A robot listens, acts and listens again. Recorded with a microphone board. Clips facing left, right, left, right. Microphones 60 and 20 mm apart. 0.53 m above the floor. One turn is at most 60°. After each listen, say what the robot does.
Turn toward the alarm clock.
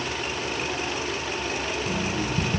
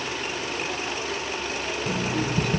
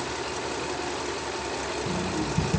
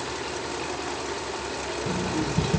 Turn 60° right.
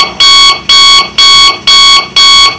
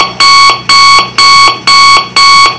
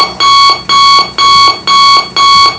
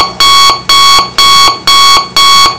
Turn 50° right.
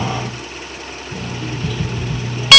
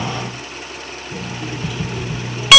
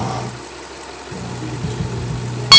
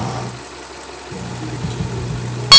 Turn 10° right.
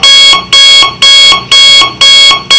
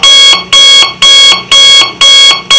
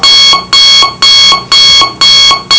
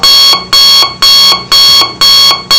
Facing the alarm clock.